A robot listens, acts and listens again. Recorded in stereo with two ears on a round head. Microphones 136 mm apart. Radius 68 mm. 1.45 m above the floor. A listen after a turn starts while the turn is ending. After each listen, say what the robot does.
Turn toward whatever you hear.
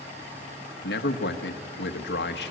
Turn 90° left.
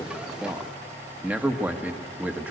Turn 10° right.
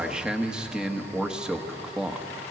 Facing the man speaking, 1 to 2 m away.